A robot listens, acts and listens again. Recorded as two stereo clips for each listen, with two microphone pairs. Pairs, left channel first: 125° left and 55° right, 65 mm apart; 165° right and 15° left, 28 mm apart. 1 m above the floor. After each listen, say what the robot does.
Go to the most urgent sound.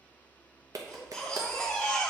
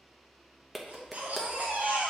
Turn 40° left.
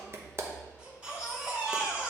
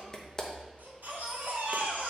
Turn 15° left.
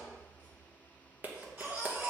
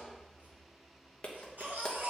Drive 1.0 m forward.
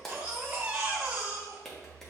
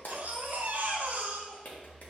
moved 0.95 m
Drive 1.0 m forward.
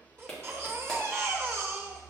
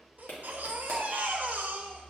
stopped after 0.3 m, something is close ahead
I am next to the baby crying.